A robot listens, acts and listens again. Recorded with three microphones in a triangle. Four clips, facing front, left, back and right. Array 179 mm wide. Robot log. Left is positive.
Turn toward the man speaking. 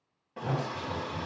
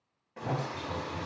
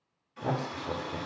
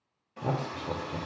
note: The man speaking: 130° right.
cmd yaw -130
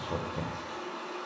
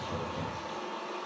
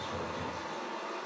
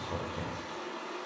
cmd idle
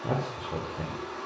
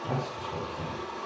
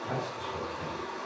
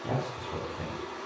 note: The man speaking is now 15° right.
cmd yaw -15
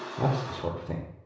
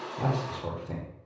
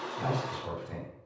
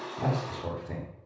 end: Facing the man speaking.